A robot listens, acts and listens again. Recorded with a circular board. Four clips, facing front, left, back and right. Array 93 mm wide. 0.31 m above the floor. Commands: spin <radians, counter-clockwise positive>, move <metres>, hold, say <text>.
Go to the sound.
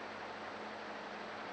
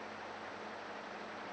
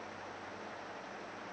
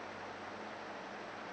hold
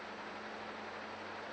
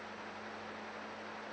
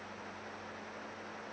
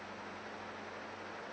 hold
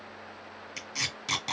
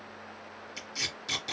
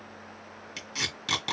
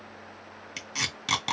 spin -1.83
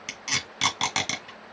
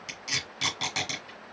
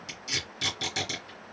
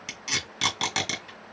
spin -0.52
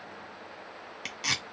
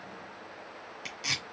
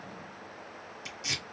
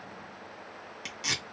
spin -0.26
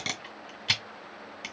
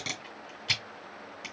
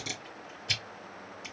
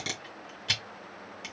move 1.0
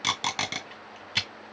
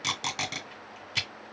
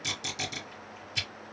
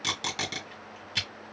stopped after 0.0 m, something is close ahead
say Blocked. The tape being pulled is further on, straight ahead.